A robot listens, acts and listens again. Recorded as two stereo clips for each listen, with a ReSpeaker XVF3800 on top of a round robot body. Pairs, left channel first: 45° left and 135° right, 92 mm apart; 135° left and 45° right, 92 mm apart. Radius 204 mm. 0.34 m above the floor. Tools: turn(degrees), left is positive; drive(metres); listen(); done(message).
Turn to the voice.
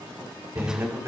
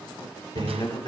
turn(degrees=170)
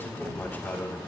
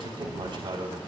turn(degrees=-20)
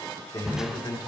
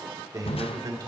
done("Facing the man speaking.")